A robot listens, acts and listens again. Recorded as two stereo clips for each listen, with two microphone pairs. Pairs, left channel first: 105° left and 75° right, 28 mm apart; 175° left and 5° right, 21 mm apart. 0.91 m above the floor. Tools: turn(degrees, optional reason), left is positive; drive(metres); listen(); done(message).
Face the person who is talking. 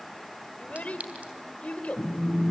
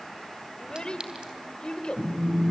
turn(degrees=135, reason="The child speaking: 135° left.")
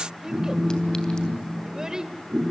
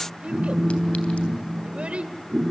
turn(degrees=-10, reason="The child speaking is now 10° right.")
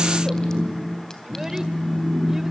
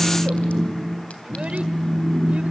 listen()
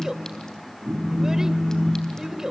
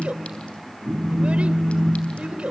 done("Facing the child speaking, 2 to 4 m away.")